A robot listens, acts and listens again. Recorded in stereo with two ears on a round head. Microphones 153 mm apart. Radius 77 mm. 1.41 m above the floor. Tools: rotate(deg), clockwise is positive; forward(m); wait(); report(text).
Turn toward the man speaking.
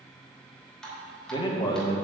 rotate(-25)
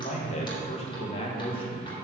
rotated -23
rotate(-30)
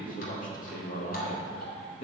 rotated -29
rotate(-135)
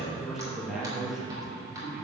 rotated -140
report("Found it: a man speaking, straight ahead.")